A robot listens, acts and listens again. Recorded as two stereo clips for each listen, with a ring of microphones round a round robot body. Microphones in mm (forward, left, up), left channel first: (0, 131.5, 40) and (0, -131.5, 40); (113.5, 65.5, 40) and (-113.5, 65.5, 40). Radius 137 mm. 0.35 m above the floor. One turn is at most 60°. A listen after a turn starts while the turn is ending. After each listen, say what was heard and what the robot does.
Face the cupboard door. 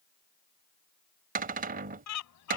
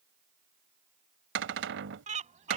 The cupboard door: 145° right. Turn 60° right.
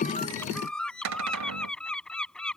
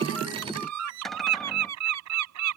The cupboard door is now 90° right. Turn 60° right.
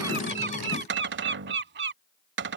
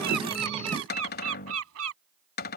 The cupboard door is now 45° right. Turn 45° right.
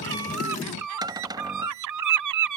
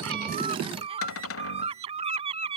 The cupboard door is now 15° right. Turn 15° right.
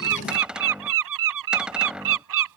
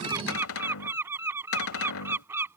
Found it: a cupboard door, straight ahead.